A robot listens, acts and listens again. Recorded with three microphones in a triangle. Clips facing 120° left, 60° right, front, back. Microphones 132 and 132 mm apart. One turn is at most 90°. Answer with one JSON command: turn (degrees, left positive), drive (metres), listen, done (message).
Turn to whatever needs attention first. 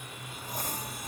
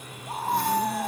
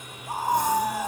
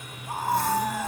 {"turn": -80}
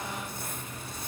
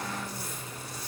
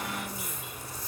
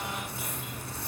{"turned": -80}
{"listen": true}
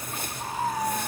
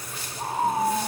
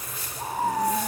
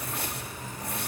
{"done": "Facing the scream."}